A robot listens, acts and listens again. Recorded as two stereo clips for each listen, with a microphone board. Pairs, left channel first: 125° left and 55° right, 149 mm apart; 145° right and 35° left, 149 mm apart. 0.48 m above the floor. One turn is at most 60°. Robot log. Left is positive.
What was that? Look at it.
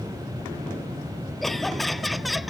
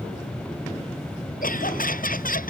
note: The laughter: 145° right.
cmd yaw -60
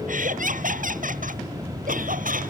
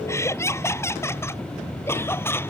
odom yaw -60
note: The laughter is now 70° right.
cmd yaw -60
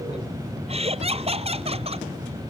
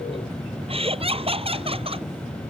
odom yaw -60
note: The laughter is now 10° right.
cmd yaw -10
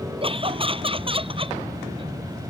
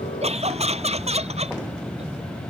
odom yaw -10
end: Found it: laughter, straight ahead.